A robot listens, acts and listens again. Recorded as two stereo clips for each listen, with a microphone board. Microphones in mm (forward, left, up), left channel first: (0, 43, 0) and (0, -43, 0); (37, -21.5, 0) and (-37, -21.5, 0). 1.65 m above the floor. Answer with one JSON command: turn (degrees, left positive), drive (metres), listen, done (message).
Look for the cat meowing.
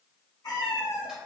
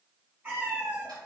{"turn": 120}
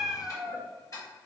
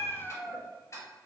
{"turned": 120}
{"turn": 10}
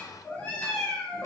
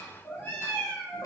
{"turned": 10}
{"turn": 55}
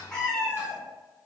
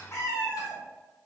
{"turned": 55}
{"turn": 20}
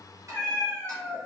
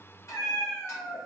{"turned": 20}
{"turn": 10}
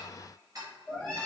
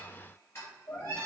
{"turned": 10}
{"done": "Facing the cat meowing."}